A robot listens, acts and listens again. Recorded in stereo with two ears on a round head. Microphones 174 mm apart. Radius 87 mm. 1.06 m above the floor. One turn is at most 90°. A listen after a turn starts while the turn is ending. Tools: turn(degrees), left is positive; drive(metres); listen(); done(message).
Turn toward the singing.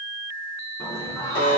turn(degrees=15)
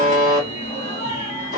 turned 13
turn(degrees=35)
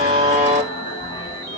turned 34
turn(degrees=20)
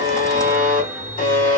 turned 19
done("Found it: singing, straight ahead, 1 to 2 m away.")